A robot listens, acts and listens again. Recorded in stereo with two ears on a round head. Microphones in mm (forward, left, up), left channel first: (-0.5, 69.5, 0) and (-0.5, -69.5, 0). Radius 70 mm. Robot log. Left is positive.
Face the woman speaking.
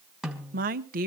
note: The woman speaking: about 60° right or 120° right.
cmd yaw -60
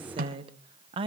note: So it is at 40° right.
cmd yaw -40
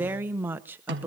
note: The woman speaking is now 15° right.
cmd yaw -15
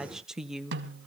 end: Found it: a woman speaking, straight ahead, 1 to 2 m away.